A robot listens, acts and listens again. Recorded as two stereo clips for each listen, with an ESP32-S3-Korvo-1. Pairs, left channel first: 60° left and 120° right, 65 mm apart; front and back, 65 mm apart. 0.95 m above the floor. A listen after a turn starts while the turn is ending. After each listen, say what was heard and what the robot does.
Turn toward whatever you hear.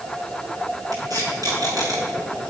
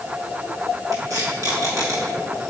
The tape being pulled: 140° right. Turn 140° right.
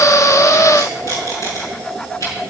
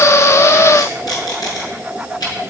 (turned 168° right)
The tape being pulled is now 25° left. Turn 25° left.
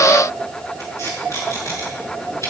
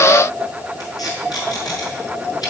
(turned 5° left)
The tape being pulled is now 20° left. Turn 20° left.
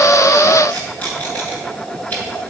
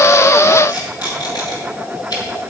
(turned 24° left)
Facing the tape being pulled, over 4 m away.